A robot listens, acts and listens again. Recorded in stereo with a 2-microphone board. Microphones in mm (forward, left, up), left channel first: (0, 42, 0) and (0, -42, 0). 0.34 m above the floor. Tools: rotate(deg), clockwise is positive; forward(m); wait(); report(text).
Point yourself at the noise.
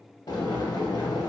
rotate(-55)
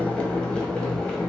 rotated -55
rotate(-15)
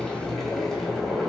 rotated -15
report("Found it: boiling, straight ahead.")